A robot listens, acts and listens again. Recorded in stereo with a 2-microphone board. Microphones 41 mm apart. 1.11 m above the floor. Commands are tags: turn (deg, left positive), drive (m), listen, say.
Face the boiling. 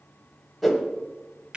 <listen/>
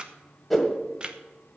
<listen/>
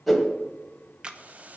<turn deg="-40"/>
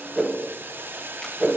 <turn deg="-100"/>
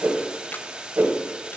<turn deg="-25"/>
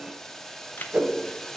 <turn deg="10"/>
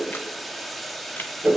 <say>Facing the boiling.</say>